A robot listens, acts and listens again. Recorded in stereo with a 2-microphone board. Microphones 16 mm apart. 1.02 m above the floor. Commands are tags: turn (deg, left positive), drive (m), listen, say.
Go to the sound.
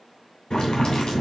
<turn deg="60"/>
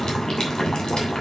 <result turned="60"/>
<turn deg="60"/>
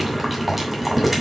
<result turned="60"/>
<drive m="1.0"/>
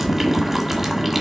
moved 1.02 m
<turn deg="-15"/>
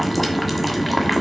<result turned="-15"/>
<drive m="1.0"/>
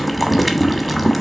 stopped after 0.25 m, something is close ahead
<say>Arrived at the boiling, straight ahead.</say>